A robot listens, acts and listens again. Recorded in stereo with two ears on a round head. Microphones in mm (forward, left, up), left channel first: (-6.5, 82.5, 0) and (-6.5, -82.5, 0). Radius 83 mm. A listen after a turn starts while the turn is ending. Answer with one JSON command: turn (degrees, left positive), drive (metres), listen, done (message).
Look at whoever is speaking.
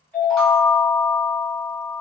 {"listen": true}
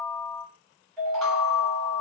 {"listen": true}
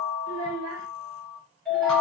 {"turn": -90}
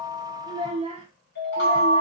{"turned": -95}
{"turn": -30}
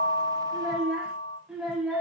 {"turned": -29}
{"done": "Found it: a child speaking, straight ahead, 1 to 2 m away."}